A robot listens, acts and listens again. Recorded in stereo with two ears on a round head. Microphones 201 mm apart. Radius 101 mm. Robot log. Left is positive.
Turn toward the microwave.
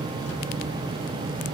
cmd idle
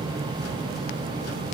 cmd idle
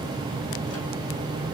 end: I can't make out a microwave.